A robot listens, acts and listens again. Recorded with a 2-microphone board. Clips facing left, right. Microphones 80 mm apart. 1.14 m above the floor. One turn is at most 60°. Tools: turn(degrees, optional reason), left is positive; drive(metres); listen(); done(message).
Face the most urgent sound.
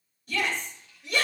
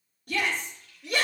turn(degrees=-60, reason="The shout: about 60° right or 120° right.")
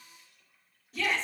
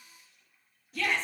done("Facing the shout, over 4 m away.")